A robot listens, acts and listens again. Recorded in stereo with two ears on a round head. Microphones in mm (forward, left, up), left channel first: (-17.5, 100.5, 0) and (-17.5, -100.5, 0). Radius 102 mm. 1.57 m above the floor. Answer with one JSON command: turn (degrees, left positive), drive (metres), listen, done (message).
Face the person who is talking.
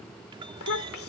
{"turn": 65}
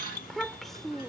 {"done": "Facing the child speaking."}